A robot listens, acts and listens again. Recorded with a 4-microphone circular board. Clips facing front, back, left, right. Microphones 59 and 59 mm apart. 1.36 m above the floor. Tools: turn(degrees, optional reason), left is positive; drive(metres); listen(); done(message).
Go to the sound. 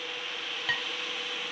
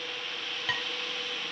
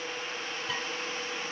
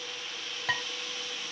turn(degrees=-90, reason="The dishes clattering: 90° right.")
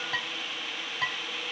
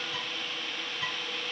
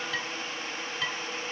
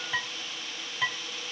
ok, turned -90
turn(degrees=-20, reason="The dishes clattering is now 20° right.")
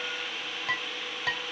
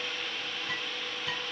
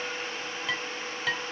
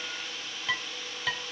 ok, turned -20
drive(metres=1.0)
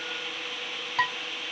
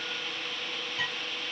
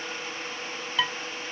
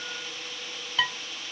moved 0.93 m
drive(metres=1.0)
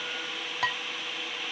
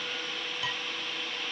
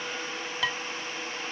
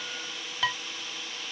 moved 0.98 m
drive(metres=1.0)
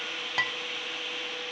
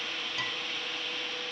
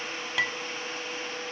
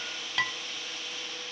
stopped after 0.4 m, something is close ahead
done("Arrived at the dishes clattering, straight ahead.")